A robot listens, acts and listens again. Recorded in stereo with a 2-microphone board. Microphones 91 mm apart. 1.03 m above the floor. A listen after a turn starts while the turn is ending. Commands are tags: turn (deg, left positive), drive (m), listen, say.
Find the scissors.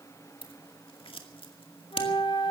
<turn deg="90"/>
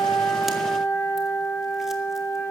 <listen/>
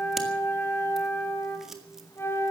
<listen/>
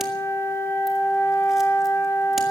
<say>Facing where the scissors came from. I can't hear it now.</say>